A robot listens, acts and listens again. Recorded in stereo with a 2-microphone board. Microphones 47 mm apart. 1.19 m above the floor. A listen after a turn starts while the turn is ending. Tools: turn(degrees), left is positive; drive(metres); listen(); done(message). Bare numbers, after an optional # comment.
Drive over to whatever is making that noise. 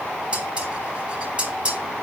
# The dishes clattering: about 25° right or 155° right.
turn(-25)
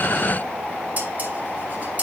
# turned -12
# So it is at 145° right.
turn(-145)
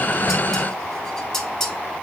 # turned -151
# The dishes clattering is now 10° left.
turn(10)
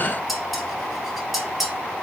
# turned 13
drive(1.0)
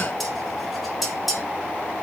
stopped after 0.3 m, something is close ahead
done("Something is in my way. I am facing the dishes clattering but have not reached it.")